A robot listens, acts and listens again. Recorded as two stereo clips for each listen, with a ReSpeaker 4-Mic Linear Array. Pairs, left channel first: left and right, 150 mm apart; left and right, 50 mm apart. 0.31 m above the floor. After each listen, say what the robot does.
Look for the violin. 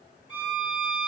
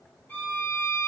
Turn 35° left.
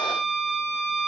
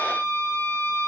Turn 105° left.
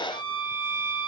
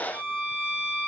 Turn 30° right.
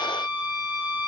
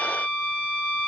Turn 15° right.
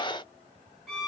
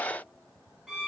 Found it: a violin, straight ahead.